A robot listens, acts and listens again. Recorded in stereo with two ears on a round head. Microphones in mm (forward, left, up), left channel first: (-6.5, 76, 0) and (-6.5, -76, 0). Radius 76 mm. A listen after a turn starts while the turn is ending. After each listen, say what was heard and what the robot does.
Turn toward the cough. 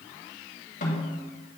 Keep listening.
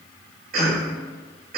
The cough: about 55° right or 125° right. Turn 55° right.
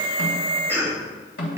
So it is at 15° right. Turn 15° right.
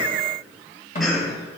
Keep listening.
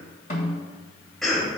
Found it: a cough, straight ahead, 1 to 2 m away.